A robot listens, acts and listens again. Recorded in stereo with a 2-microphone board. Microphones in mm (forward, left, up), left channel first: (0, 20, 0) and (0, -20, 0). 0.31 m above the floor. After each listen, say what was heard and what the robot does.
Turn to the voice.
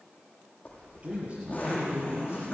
The man speaking: about 25° right or 155° right. Turn 25° right.
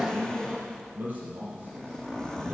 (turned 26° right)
So it is at 135° right. Turn 135° right.
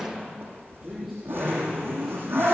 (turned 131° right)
Facing the man speaking.